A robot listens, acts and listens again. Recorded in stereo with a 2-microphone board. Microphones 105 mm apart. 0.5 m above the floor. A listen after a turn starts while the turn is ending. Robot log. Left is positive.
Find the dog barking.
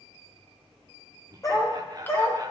note: The dog barking: about 35° left or 145° left.
cmd yaw +35
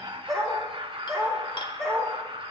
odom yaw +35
end: Facing the dog barking, over 4 m away.